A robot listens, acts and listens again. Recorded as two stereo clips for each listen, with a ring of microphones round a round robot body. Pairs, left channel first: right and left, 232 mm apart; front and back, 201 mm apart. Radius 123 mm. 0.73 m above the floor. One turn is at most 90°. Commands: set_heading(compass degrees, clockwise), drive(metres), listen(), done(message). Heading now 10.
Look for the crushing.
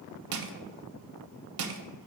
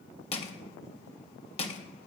set_heading(310)
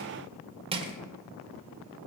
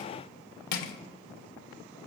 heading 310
set_heading(290)
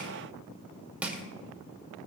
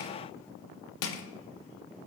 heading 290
done("Facing the crushing.")